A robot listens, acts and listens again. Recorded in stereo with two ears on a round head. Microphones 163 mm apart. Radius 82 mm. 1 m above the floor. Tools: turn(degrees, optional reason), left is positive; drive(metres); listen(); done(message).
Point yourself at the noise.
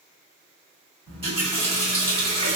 turn(degrees=-35, reason="The running tap: about 35° right or 145° right.")
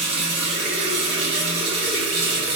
turn(degrees=-115, reason="So it is at 115° right.")
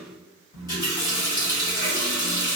turn(degrees=20, reason="The running tap is now 20° left.")
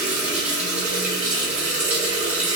turn(degrees=-10, reason="The running tap is now 10° right.")
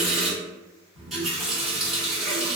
done("Facing the running tap.")